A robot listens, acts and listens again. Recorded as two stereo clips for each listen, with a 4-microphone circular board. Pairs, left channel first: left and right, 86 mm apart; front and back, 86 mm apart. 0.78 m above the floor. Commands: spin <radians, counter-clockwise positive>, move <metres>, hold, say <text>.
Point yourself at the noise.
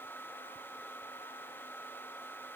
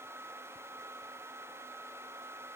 hold
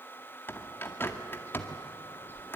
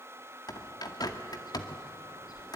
spin 0.52
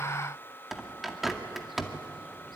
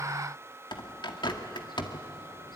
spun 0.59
say Facing the bird, 2 to 4 m away.